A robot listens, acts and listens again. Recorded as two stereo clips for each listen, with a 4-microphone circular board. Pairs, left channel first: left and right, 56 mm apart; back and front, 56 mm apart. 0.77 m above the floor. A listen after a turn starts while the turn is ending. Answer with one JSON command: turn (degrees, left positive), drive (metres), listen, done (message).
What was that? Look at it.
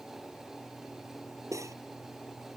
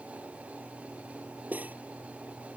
{"turn": -65}
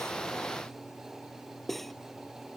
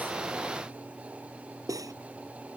{"done": "Found it: cutlery clinking, straight ahead."}